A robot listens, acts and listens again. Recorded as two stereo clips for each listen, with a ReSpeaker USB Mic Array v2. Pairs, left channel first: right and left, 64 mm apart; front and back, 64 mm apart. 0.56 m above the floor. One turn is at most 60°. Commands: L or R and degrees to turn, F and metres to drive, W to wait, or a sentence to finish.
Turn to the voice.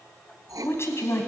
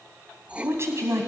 R60
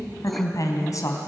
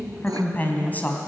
R60
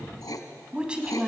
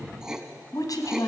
L15
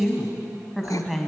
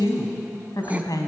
Facing the woman speaking, 2 to 4 m away.